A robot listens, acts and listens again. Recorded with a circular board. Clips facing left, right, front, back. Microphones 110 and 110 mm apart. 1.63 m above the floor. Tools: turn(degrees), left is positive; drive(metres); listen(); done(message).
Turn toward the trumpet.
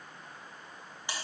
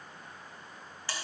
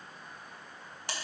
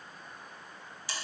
listen()
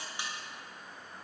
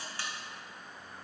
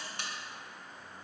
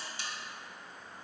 listen()
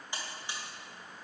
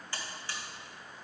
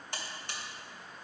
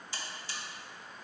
done("I can't make out a trumpet, only a buzzer.")